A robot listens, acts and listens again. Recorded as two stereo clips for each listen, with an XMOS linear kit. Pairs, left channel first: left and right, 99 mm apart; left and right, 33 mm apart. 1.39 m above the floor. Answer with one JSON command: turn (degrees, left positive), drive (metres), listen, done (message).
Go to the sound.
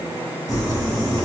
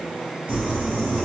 {"turn": -40}
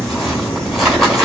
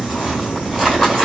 {"drive": 1.0}
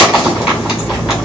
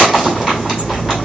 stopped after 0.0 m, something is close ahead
{"done": "Blocked. The crumpling is further on, straight ahead."}